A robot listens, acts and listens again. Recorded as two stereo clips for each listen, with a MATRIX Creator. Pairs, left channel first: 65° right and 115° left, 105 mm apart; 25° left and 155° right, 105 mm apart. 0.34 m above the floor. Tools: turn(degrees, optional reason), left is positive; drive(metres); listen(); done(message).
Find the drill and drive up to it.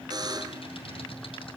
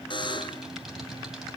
listen()
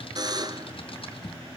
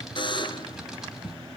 listen()
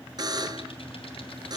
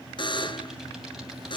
done("I can't make out a drill, only typing on a keyboard and a buzzer.")